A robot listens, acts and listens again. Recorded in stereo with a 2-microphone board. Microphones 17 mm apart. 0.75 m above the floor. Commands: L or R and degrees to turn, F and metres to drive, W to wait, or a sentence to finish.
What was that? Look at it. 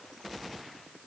W
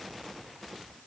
W
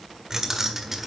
R30
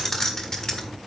L40
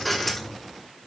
L25
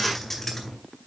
L25
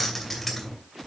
L15
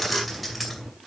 Found it: keys jangling, straight ahead, 2 to 4 m away.